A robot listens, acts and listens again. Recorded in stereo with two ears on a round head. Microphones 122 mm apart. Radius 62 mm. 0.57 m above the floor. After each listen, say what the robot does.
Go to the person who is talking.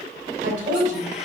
Turn 60° right.
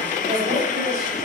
Turn 55° right.
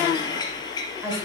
Turn 15° right.
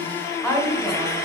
Drive 1.0 m forward.
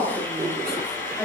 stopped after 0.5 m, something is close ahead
Blocked. The woman speaking is further on, straight ahead.